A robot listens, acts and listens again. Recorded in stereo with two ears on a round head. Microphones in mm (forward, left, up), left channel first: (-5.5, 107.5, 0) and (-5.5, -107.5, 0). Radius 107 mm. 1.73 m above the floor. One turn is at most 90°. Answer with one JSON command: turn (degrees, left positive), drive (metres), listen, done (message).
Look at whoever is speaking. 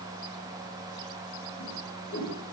{"listen": true}
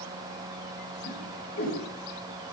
{"listen": true}
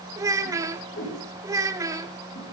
{"turn": -30}
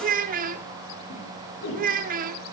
{"turn": -90}
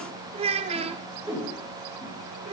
{"turn": -30}
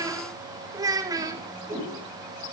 {"turn": -15}
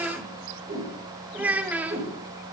{"done": "Facing the child speaking."}